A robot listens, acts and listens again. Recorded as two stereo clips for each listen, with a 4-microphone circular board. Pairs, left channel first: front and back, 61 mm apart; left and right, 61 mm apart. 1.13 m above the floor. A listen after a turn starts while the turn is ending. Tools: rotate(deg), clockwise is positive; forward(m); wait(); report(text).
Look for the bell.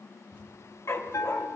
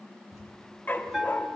rotate(10)
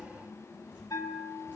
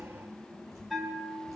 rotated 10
report("Facing the bell, 2 to 4 m away.")